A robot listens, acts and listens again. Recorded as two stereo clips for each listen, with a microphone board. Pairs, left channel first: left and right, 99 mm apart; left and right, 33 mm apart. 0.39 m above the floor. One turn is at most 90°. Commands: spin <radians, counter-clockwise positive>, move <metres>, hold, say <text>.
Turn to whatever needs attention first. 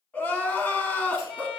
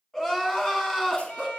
spin 0.26
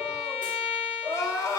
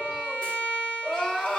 spin 1.57
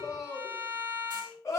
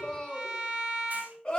spin 0.61
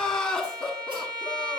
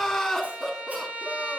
spin 0.17
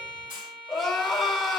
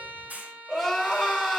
say Found it: crying, straight ahead, 1 to 2 m away.